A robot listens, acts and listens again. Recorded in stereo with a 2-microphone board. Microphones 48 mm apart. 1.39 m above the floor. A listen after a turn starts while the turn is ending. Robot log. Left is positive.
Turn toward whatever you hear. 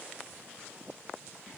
cmd idle
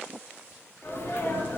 note: The sneeze: about 55° left or 125° left.
cmd yaw +55
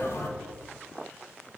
cmd idle
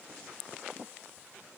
end: I heard a sneeze, but can't make it out now. It was about straight ahead or 70° left.